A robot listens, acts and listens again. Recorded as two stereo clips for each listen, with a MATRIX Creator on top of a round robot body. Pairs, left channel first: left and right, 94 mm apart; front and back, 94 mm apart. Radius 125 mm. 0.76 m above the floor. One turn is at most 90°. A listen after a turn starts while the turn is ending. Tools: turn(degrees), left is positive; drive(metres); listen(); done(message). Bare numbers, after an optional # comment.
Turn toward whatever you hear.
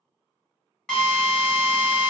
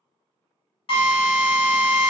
# The drill: 10° left.
turn(10)
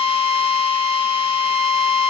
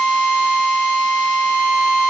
done("Found it: a drill, straight ahead.")